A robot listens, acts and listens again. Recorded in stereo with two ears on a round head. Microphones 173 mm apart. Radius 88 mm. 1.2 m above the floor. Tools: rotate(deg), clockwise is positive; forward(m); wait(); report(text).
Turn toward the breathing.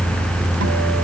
wait()
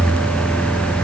wait()
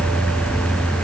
report("I can't make out breathing to turn to.")